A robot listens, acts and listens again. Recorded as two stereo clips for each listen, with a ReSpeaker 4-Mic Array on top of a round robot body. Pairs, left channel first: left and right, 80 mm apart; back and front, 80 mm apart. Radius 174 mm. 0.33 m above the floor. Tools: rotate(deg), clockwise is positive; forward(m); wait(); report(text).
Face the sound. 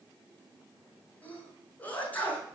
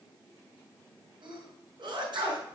rotate(-20)
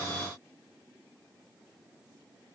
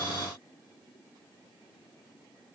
report("I heard a sneeze from this way, but can't make it out now.")